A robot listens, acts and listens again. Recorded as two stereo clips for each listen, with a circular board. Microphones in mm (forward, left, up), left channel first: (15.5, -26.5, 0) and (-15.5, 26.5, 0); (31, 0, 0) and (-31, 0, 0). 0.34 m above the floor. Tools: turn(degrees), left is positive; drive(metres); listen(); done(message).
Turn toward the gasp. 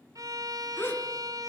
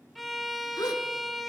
done("Facing the gasp.")